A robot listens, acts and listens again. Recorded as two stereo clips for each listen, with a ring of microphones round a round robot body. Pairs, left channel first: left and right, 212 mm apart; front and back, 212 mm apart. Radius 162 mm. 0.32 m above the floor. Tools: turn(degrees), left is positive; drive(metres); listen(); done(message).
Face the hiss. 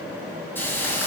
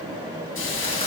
turn(degrees=10)
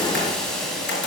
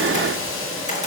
done("Facing the hiss, 2 to 4 m away.")